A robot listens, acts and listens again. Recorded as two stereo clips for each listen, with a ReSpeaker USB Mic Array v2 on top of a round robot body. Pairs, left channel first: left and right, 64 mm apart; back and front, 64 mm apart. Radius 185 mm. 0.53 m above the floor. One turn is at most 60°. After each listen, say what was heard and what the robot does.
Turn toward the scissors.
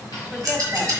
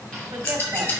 The scissors: 130° right. Turn 60° right.
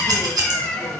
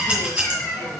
The scissors is now 75° right. Turn 60° right.
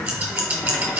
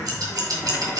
The scissors is now 30° right. Turn 30° right.
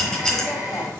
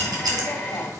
Facing the scissors.